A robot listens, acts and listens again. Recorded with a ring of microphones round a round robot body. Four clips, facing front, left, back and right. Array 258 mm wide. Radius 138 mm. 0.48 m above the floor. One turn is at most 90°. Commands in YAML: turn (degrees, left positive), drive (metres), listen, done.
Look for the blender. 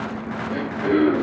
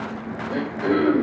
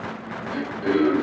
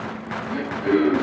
listen: true
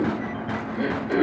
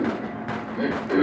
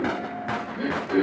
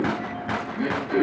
listen: true
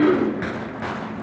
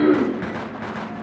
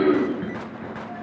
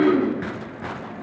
done: "I can't make out a blender to turn to."